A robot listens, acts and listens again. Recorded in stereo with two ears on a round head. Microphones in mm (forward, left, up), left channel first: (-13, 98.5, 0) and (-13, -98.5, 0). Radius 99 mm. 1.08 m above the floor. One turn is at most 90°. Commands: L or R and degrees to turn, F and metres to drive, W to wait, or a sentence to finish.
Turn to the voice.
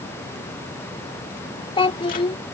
L25
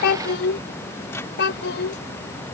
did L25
L90
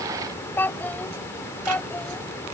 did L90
L10
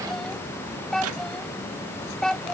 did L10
Found it: a child speaking, straight ahead.